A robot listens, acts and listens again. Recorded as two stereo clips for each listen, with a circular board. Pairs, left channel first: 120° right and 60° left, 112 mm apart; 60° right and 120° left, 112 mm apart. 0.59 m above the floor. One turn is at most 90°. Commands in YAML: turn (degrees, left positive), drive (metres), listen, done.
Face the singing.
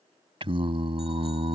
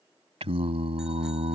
turn: 90
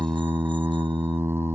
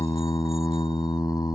turn: -10
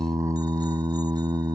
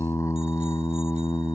done: "Found it: singing, straight ahead."